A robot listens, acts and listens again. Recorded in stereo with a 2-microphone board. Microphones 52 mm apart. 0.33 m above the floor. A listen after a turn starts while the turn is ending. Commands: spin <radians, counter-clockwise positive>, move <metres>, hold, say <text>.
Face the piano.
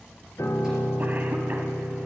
spin 1.57
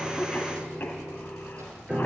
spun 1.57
spin -0.26
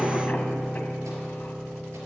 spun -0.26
say Facing the piano.